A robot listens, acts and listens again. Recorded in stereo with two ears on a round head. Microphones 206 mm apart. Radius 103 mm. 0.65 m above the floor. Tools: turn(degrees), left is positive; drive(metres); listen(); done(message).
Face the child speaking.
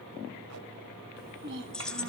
turn(degrees=-55)
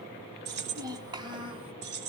turn(degrees=-25)
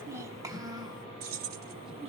turn(degrees=-25)
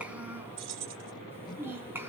turn(degrees=-10)
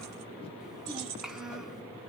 done("Facing the child speaking, 2 to 4 m away.")